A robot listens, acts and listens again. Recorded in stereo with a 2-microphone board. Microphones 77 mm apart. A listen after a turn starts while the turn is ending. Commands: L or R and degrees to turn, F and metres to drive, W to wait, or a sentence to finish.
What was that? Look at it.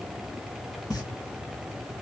L55
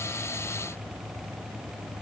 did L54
W
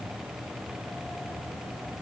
I heard a pop, but can't make it out now. It was about straight ahead or 75° left.